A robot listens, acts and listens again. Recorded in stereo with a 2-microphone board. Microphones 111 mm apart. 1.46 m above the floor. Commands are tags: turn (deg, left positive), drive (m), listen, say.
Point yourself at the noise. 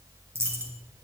<turn deg="-20"/>
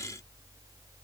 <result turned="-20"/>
<listen/>
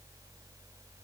<say>I heard a dropped coin, but can't make it out now. It was about straight ahead or 140° right.</say>